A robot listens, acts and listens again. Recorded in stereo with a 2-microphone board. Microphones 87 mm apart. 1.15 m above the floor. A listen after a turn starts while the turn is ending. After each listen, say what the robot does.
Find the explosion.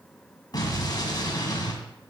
Turn 50° left.
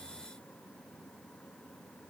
Keep listening.
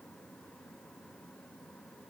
I heard an explosion, but can't make it out now. It was about straight ahead or 80° left.